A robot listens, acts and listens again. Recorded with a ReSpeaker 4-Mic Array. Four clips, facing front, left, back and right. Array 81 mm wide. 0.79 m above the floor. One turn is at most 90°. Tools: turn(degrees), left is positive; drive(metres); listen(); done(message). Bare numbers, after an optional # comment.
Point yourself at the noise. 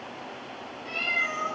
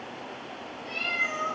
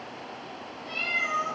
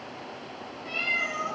# The cat meowing: 65° right.
turn(-65)
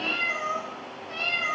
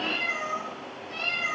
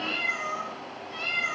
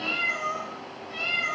done("Facing the cat meowing.")